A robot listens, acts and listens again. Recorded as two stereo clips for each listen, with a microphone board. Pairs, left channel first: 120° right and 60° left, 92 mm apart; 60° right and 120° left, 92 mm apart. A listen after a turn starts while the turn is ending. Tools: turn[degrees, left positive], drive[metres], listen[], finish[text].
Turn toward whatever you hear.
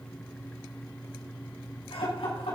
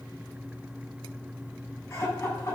Thought: The laughter: 125° right.
Action: turn[-125]
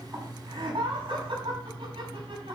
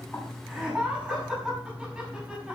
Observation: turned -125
Thought: The laughter is now 35° left.
Action: turn[35]
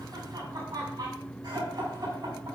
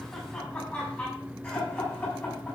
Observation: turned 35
Thought: The laughter is now 15° left.
Action: turn[15]
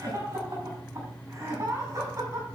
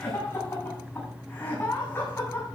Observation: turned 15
Action: finish[Found it: laughter, straight ahead, over 4 m away.]